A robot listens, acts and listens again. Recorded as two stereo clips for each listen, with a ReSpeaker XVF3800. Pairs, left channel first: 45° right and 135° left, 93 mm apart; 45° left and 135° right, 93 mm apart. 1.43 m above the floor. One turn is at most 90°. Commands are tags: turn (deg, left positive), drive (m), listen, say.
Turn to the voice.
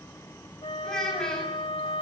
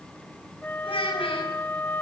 <turn deg="40"/>
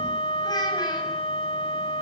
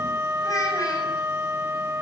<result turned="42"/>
<listen/>
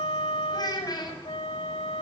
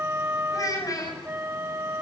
<say>Facing the child speaking, over 4 m away.</say>